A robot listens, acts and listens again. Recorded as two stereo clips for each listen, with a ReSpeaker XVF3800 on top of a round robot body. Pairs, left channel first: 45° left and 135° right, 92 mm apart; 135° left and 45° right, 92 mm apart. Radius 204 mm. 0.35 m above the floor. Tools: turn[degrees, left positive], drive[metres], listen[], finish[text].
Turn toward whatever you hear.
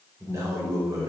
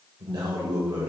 Thought: The man speaking: 80° right.
Action: turn[-80]
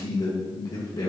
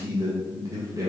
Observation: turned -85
Action: finish[Found it: a man speaking, straight ahead.]